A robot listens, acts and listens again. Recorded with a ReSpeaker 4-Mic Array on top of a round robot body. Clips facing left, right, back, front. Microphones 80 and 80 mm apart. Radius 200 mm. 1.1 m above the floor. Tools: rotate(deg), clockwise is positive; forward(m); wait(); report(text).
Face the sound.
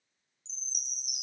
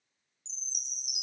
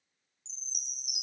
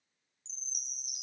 rotate(-50)
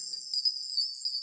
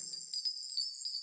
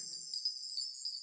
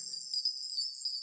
rotate(-15)
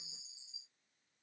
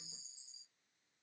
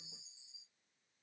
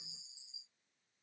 report("Facing the chime.")